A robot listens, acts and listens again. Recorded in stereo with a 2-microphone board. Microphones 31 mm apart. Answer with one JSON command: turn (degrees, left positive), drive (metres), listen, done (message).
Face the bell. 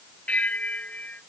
{"turn": 50}
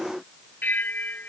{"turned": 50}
{"turn": 80}
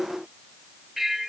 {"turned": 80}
{"turn": -10}
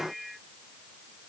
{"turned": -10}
{"done": "Found it: a bell, straight ahead."}